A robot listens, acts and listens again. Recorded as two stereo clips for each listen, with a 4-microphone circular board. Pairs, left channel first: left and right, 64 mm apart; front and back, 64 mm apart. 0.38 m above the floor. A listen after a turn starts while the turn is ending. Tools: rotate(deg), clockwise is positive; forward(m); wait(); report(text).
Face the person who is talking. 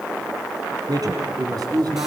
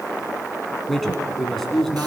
rotate(85)
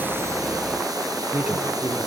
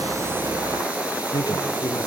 rotate(20)
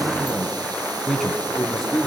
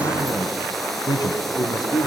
report("Facing the man speaking, 2 to 4 m away.")